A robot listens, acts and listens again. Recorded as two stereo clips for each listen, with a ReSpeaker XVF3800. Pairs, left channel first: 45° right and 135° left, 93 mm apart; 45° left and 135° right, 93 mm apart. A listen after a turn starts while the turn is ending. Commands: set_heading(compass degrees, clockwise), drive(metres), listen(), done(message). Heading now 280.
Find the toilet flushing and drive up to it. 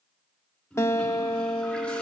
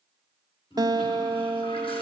set_heading(245)
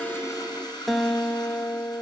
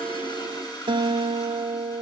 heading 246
drive(1.0)
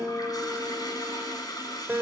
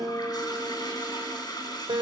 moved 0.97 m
drive(1.0)
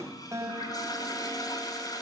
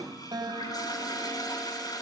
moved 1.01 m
drive(1.0)
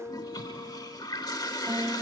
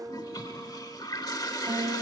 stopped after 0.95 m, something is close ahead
done("I am next to the toilet flushing.")